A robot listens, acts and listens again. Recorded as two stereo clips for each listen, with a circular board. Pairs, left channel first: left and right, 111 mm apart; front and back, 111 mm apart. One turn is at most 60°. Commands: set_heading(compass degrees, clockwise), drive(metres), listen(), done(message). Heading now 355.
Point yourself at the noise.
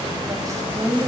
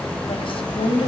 set_heading(25)
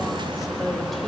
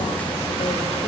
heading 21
listen()
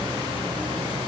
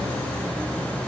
listen()
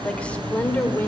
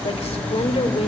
set_heading(1)
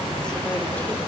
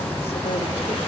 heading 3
listen()
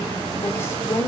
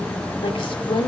set_heading(328)
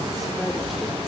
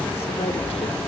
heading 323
listen()
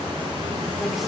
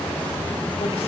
listen()
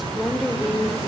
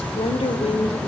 done("Facing the woman speaking, 1 to 2 m away.")